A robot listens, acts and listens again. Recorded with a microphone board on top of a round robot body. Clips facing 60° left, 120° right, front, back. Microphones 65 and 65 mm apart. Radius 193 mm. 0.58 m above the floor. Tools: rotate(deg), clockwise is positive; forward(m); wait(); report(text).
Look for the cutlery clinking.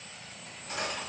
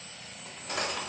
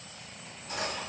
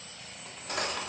rotate(150)
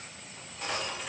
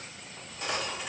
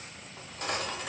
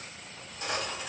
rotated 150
rotate(35)
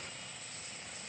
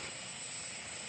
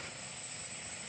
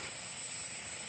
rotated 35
wait()
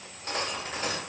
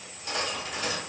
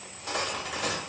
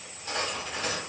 report("Found it: cutlery clinking, straight ahead.")